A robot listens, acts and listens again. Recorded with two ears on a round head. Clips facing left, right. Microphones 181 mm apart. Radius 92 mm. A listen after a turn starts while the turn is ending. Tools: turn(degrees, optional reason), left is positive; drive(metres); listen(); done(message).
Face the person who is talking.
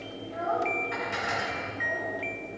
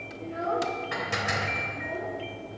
turn(degrees=-25, reason="The child speaking: about 25° right or 155° right.")
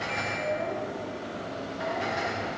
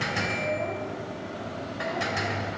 listen()
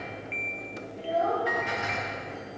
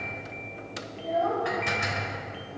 turn(degrees=10, reason="So it is at 10° left.")
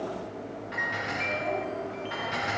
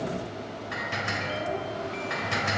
done("Facing the child speaking, over 4 m away.")